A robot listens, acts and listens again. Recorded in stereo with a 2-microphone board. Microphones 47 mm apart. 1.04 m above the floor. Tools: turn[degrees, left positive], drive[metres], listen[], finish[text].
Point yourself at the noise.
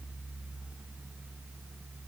Action: listen[]
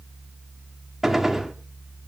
Action: turn[-30]
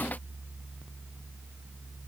Action: listen[]
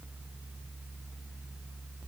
Action: finish[I heard a gunshot, but can't make it out now. It was about 25° left or 145° right.]